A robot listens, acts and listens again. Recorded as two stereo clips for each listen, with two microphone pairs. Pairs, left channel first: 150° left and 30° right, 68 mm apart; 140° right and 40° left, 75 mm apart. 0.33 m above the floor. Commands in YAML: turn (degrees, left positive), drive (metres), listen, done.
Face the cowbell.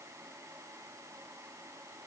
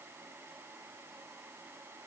listen: true
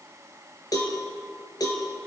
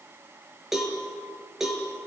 turn: 125
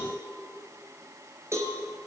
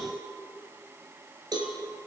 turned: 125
turn: 20
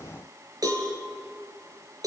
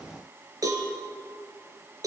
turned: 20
done: "Facing the cowbell, over 4 m away."